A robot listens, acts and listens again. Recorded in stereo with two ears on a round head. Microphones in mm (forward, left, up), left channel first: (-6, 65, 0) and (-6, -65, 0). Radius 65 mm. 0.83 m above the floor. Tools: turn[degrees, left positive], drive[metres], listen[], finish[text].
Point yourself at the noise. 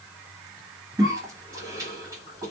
Thought: The cough: about 25° right or 155° right.
Action: turn[-25]
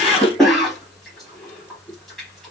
Action: finish[Facing the cough.]